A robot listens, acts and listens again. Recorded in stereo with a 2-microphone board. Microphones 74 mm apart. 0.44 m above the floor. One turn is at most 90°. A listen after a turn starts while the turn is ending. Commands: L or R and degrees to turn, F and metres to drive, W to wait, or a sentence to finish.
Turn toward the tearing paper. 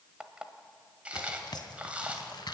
L70
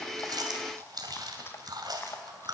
W
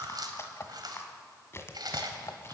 L35
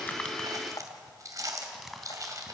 Facing the tearing paper.